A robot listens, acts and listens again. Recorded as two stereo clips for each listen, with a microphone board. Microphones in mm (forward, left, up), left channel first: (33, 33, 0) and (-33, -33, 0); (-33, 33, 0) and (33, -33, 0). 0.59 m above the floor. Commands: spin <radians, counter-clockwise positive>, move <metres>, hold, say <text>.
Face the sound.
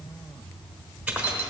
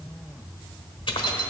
spin 2.62
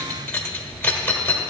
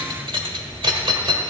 spin -0.52
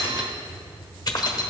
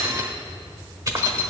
say Found it: keys jangling, straight ahead, 1 to 2 m away.